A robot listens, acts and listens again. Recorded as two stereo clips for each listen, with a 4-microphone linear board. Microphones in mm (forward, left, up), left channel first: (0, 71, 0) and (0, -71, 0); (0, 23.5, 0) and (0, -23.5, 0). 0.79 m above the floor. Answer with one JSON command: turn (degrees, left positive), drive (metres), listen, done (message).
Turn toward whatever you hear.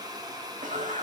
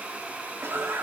{"turn": -60}
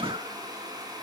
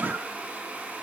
{"listen": true}
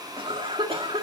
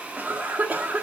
{"turn": -45}
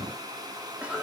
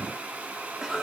{"turn": -10}
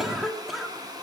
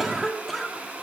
{"done": "Found it: a cough, straight ahead, 1 to 2 m away."}